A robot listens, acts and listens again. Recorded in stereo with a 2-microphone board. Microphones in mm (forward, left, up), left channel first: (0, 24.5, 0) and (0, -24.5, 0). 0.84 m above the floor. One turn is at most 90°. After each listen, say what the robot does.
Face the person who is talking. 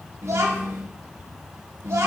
Turn 75° right.
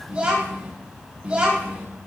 Turn 25° right.
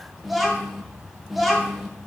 Facing the child speaking.